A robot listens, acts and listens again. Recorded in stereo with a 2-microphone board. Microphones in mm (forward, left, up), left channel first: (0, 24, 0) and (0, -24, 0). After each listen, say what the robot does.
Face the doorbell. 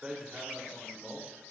Keep listening.
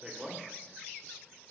Keep listening.
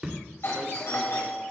Turn 60° left.
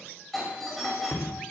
Found it: a doorbell, straight ahead, over 4 m away.